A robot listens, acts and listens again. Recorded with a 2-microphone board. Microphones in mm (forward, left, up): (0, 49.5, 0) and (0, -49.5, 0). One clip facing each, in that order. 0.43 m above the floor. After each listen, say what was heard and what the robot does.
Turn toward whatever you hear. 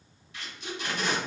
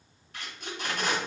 The tape being pulled: about 45° right or 135° right. Turn 45° right.
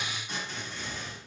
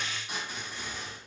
So it is at 10° right. Turn 10° right.
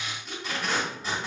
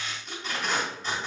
Found it: tape being pulled, straight ahead, 1 to 2 m away.